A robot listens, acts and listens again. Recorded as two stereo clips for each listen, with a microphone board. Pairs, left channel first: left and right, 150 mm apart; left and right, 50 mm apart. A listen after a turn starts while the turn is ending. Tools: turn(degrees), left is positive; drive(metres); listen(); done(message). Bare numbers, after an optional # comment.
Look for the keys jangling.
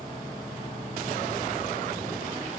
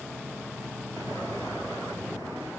listen()
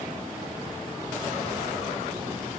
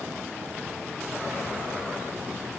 listen()
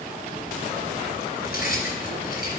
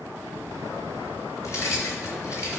turn(90)
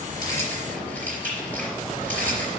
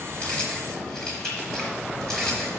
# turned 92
# So it is at 10° left.
turn(10)
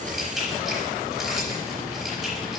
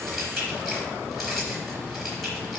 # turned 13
done("Facing the keys jangling, over 4 m away.")